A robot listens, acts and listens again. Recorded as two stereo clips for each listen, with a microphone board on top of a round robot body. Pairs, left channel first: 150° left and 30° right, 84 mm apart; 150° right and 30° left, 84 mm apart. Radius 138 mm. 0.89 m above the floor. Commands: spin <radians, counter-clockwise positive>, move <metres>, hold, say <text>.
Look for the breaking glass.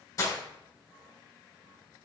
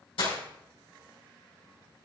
spin -2.79
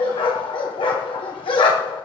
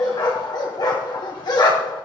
say Facing where the breaking glass came from. I can't hear it now.